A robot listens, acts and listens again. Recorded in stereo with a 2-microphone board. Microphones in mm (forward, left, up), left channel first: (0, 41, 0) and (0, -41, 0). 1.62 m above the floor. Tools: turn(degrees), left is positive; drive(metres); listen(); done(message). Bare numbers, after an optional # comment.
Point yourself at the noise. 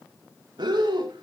# The breathing: about 65° right or 115° right.
turn(-65)
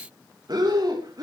# So it is at 55° right.
turn(-55)
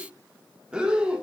# The breathing is now 10° right.
turn(-10)
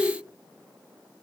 done("Found it: breathing, straight ahead, 2 to 4 m away.")